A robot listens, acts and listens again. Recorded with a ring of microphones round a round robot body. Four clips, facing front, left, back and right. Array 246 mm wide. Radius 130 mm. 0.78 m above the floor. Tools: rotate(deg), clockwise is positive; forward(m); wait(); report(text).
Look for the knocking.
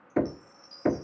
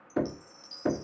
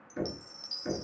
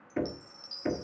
rotate(-15)
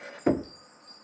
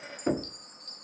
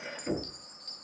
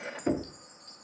report("Facing the knocking, 1 to 2 m away.")